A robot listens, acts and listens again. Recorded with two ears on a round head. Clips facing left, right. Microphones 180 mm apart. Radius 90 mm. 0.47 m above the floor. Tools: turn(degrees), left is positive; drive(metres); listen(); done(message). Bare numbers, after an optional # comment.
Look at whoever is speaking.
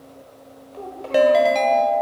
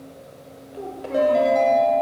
turn(-30)
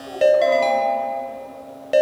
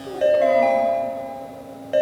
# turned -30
# So it is at 140° right.
turn(-140)
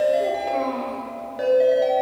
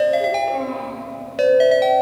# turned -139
done("Found it: a child speaking, straight ahead, under 1 m away.")